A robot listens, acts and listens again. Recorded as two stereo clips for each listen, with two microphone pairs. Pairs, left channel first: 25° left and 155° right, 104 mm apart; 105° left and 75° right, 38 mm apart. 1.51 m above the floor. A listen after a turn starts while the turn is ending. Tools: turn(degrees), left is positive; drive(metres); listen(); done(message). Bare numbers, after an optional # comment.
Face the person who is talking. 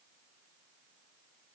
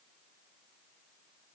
listen()
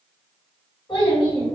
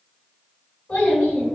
# The child speaking: 65° left.
turn(65)
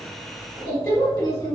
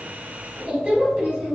# The child speaking is now 20° right.
turn(-20)
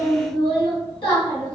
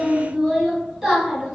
done("Facing the child speaking, 1 to 2 m away.")